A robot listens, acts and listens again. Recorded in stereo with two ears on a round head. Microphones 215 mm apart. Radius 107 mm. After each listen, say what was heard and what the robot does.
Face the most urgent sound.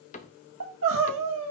The crying: about 60° right or 120° right. Turn 60° right.
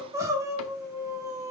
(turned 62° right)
So it is at 15° right. Turn 15° right.
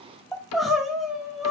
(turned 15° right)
Found it: crying, straight ahead.